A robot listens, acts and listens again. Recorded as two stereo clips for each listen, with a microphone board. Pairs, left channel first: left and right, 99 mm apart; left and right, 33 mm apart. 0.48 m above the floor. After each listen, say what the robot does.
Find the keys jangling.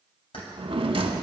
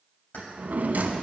Turn 70° left.
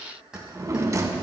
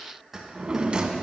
Turn 10° right.
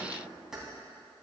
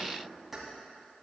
Facing the keys jangling, 2 to 4 m away.